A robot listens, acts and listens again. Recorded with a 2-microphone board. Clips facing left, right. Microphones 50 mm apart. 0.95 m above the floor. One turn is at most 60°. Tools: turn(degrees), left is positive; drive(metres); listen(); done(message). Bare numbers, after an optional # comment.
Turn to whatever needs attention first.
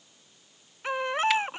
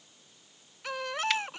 # The baby crying: about 30° left or 150° left.
turn(30)
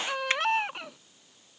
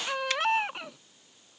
done("Facing the baby crying.")